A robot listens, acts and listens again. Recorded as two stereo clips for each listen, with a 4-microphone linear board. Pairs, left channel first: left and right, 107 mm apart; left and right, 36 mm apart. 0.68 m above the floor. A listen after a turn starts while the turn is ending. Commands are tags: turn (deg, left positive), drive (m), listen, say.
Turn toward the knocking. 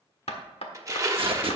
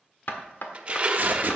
<turn deg="75"/>
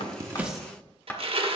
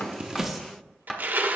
<turn deg="15"/>
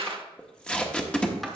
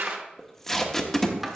<listen/>
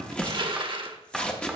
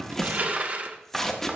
<say>Found it: knocking, straight ahead.</say>